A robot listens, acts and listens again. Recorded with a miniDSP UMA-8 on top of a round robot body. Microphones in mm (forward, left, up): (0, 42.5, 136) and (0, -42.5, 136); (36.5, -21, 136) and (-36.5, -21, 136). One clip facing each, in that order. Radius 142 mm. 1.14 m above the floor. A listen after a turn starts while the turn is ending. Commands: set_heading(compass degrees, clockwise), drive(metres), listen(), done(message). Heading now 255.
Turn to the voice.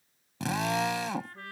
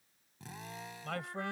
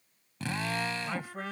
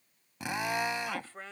set_heading(330)
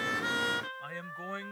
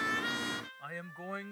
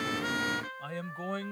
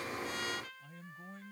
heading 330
done("Found it: a man speaking, straight ahead.")